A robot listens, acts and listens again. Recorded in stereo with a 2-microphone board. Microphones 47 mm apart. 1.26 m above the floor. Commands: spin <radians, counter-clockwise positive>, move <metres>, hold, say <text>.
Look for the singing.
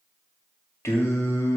spin 1.57
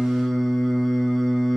say Found it: singing, straight ahead.